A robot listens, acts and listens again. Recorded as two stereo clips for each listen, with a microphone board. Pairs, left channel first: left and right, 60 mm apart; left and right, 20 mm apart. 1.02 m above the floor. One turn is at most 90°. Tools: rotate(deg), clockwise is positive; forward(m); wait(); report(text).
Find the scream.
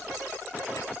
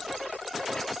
wait()
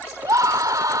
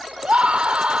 rotate(90)
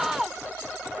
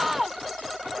report("Facing the scream.")